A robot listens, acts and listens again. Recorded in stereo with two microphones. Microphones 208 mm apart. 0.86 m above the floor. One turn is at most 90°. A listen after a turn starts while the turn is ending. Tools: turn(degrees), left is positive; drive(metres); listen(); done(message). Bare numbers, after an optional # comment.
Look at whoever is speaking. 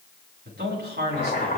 # The man speaking: about 50° right or 130° right.
turn(-50)
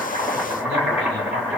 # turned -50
listen()
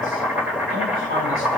listen()
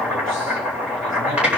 done("I heard a man speaking, but can't make it out now. It was about straight ahead or 80° right.")